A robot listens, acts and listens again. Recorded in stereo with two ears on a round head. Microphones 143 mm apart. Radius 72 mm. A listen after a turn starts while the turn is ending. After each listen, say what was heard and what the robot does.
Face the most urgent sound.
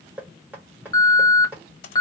The alarm: about 25° left or 155° left. Turn 25° left.
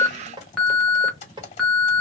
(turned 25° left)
Found it: an alarm, straight ahead, 1 to 2 m away.